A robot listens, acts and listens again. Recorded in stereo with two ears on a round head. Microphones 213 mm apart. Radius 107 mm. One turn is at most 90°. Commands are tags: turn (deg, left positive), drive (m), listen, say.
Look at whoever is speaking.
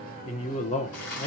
<turn deg="30"/>
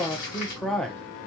<say>Facing the man speaking, under 1 m away.</say>